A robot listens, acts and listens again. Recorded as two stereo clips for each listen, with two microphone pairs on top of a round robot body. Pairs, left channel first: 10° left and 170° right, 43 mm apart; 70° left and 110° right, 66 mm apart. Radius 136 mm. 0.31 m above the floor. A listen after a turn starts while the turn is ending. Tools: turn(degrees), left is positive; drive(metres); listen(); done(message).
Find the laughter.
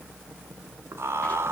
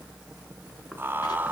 turn(degrees=-175)
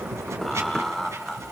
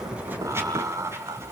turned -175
turn(degrees=-80)
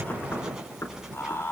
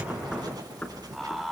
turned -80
turn(degrees=-20)
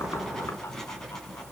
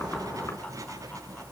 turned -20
listen()
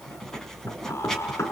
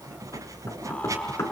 done("Found it: laughter, straight ahead.")